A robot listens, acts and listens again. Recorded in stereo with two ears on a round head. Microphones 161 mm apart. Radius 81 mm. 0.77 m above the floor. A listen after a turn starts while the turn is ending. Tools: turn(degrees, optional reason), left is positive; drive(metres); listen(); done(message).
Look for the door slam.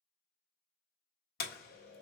turn(degrees=55, reason="The door slam: about 55° left or 125° left.")
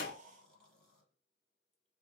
listen()
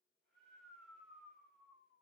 done("I heard a door slam, but can't make it out now. It was about straight ahead or 70° left.")